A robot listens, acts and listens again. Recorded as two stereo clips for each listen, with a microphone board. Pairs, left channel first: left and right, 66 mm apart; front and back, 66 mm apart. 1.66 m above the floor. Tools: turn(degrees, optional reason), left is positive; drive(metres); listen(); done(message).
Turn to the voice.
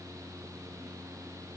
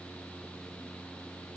listen()
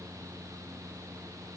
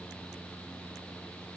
listen()
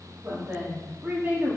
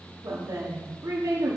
turn(degrees=-150, reason="The woman speaking: 150° right.")
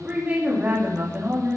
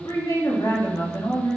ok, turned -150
turn(degrees=-25, reason="The woman speaking is now 25° right.")
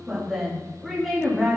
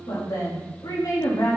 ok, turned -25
done("Found it: a woman speaking, straight ahead.")